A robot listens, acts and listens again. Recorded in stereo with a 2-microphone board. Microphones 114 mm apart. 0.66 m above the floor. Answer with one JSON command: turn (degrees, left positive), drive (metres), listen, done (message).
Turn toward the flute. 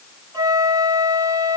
{"turn": -30}
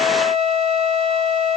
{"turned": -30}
{"turn": -120}
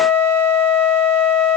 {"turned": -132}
{"turn": 15}
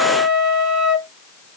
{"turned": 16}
{"done": "Found it: a flute, straight ahead, 1 to 2 m away."}